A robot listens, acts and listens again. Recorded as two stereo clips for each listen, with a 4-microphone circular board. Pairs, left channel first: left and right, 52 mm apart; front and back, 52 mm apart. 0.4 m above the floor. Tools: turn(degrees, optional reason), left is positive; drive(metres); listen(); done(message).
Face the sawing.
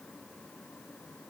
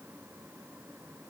listen()
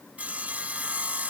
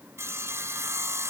turn(degrees=-150, reason="The sawing: 150° right.")
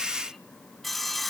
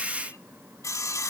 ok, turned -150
done("Facing the sawing.")